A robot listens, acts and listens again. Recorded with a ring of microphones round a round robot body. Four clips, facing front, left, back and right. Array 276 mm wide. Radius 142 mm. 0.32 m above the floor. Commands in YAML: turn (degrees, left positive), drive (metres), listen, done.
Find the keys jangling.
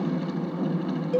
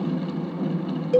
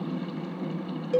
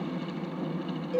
listen: true
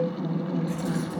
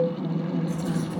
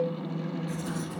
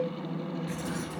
turn: -30
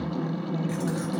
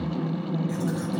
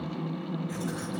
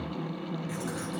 done: "Found it: keys jangling, straight ahead."